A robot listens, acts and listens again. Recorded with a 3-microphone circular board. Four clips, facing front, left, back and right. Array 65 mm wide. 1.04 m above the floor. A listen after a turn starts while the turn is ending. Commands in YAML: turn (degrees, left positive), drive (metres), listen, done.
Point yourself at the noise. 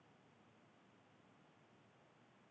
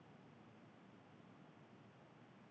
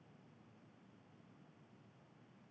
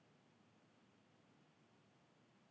listen: true
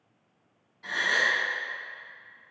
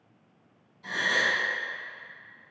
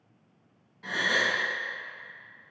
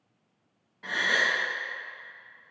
turn: -105
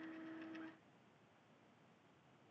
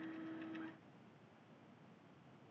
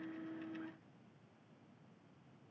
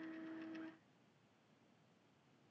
done: "I heard a gasp from this way, but can't make it out now."